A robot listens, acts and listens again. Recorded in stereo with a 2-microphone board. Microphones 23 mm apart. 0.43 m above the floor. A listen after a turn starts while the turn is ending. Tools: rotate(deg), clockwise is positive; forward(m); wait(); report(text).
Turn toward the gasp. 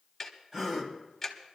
rotate(25)
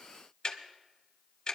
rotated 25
wait()
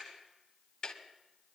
report("I heard a gasp, but can't make it out now. It was about straight ahead or 130° right.")